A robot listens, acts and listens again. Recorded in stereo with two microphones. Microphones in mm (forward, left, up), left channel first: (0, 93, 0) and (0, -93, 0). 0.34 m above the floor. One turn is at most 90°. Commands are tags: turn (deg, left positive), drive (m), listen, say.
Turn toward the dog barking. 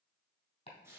<listen/>
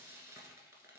<listen/>
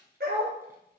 <turn deg="-60"/>
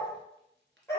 <turn deg="15"/>
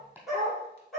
<say>Facing the dog barking, over 4 m away.</say>